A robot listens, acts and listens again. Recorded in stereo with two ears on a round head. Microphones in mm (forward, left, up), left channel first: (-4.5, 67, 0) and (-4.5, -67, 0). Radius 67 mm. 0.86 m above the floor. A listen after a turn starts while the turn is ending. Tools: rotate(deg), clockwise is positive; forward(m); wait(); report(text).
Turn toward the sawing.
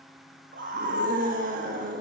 wait()
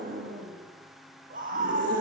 wait()
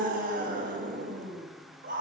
report("I can't make out sawing, only a scream.")